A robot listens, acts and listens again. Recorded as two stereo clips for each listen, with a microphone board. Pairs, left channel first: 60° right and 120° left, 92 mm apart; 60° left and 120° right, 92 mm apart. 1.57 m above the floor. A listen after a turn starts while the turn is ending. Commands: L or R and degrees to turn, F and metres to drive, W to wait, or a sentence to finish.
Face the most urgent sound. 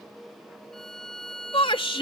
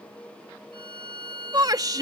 R75
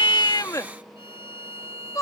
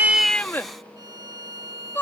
R10
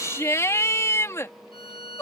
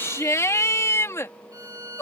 Facing the shout.